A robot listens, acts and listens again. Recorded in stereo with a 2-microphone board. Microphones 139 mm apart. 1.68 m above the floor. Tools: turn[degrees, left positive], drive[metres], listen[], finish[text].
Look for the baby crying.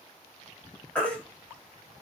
Action: turn[30]
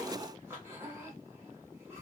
Action: listen[]
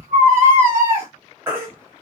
Thought: So it is at 20° right.
Action: turn[-20]
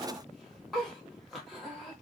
Action: finish[Facing the baby crying, under 1 m away.]